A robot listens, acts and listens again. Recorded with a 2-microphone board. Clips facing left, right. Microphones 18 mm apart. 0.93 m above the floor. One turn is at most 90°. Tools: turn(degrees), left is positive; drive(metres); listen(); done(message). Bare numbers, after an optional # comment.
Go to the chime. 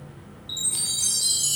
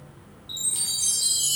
# The chime: about 20° left or 160° left.
turn(20)
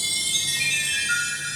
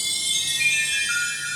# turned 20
drive(1.0)
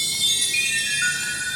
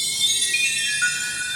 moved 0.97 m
drive(1.0)
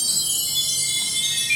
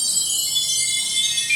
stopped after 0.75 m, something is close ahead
# The chime is now 10° right.
turn(-10)
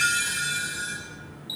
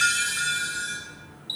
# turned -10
done("Arrived at the chime, straight ahead.")